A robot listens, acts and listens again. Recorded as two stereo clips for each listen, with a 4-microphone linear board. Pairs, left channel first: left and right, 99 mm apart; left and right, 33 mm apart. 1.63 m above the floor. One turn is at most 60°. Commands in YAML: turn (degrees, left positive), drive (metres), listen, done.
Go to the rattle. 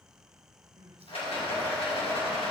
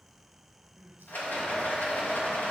turn: 60
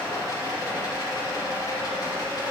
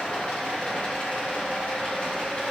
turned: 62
turn: 40
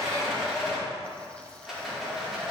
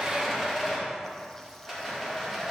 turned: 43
drive: 1.0
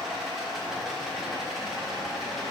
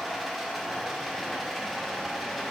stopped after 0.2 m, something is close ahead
done: "Something is in my way. I am facing the rattle but have not reached it."